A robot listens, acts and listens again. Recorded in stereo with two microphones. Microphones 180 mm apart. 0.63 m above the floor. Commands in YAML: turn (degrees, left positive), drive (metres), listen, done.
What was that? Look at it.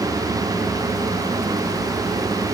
listen: true
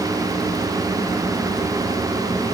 listen: true
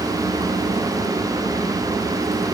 done: "I can't make out anything to turn to."